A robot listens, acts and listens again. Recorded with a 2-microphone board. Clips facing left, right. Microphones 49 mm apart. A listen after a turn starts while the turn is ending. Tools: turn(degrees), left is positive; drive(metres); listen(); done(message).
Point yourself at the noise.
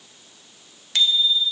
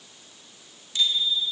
turn(degrees=90)
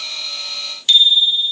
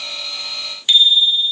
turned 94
turn(degrees=-15)
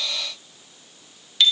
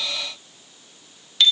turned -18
done("Facing the bicycle bell.")